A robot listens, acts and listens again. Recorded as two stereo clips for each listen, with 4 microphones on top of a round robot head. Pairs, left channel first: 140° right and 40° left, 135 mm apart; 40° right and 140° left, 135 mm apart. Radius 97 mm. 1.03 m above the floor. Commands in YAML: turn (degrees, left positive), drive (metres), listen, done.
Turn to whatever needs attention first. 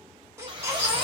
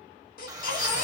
turn: -30
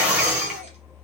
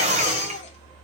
done: "Facing the baby crying."